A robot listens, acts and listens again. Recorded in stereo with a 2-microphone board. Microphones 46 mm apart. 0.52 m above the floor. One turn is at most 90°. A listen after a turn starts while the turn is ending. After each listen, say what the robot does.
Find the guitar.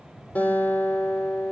Turn 35° left.
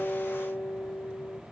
Turn 90° left.
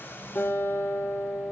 Turn 50° left.
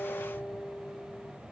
Facing the guitar, over 4 m away.